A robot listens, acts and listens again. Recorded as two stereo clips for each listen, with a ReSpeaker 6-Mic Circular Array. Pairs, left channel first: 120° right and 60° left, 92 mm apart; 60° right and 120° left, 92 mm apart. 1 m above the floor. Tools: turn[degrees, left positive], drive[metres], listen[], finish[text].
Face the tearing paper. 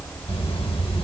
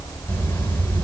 Action: listen[]
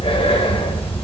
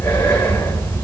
Action: listen[]
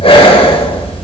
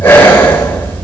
Action: finish[I can't make out tearing paper, only breathing.]